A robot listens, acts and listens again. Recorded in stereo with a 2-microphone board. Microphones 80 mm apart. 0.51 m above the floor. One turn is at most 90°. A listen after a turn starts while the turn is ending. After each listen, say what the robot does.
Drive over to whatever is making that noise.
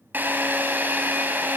Turn 25° right.
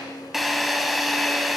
Drive 1.0 m forward.
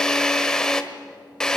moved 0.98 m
Turn 10° left.
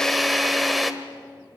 Drive 1.0 m forward.
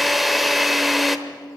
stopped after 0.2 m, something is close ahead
Arrived at the drill, straight ahead.